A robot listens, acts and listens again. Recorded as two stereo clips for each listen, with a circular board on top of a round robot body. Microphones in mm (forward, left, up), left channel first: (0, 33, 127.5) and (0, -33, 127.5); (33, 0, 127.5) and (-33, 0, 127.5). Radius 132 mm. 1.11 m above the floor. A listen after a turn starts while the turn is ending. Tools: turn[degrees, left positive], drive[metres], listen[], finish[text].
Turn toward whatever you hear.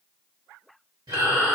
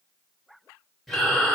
Thought: The breathing: 85° right.
Action: turn[-85]
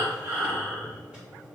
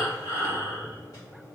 Thought: The breathing is now 15° right.
Action: turn[-15]
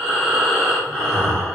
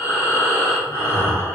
Thought: The breathing is now 10° right.
Action: turn[-10]
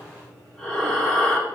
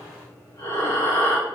Action: finish[Facing the breathing.]